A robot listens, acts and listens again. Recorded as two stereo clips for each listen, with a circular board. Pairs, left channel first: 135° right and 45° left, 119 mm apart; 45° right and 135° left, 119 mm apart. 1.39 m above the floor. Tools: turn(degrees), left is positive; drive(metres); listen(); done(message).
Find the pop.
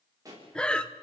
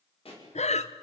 turn(degrees=-15)
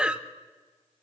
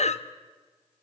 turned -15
done("I heard a pop from this way, but can't make it out now.")